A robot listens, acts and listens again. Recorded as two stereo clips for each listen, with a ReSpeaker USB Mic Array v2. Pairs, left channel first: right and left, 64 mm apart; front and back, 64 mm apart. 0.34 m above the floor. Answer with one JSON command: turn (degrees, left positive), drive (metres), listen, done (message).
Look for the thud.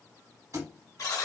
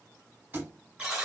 {"turn": 120}
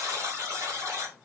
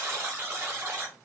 {"done": "Facing where the thud came from. I can't hear it now."}